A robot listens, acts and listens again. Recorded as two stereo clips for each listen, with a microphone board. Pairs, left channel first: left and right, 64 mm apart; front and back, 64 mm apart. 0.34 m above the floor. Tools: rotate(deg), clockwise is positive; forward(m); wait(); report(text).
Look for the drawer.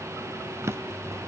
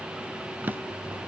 rotate(125)
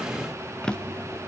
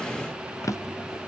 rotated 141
rotate(-20)
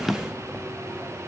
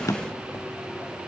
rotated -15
report("Found it: a drawer, straight ahead, under 1 m away.")